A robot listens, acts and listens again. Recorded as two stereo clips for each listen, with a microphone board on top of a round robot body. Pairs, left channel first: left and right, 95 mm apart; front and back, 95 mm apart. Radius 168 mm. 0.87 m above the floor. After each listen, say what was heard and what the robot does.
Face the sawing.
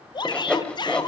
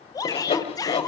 The sawing: 10° left. Turn 10° left.
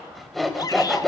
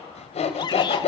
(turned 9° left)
Facing the sawing.